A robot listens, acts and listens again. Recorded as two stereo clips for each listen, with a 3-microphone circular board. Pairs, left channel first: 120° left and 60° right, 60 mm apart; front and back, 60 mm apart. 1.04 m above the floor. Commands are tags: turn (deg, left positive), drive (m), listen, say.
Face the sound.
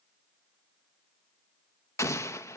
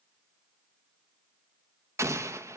<turn deg="150"/>
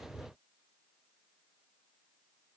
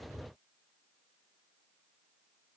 <say>I heard an explosion from this way, but can't make it out now.</say>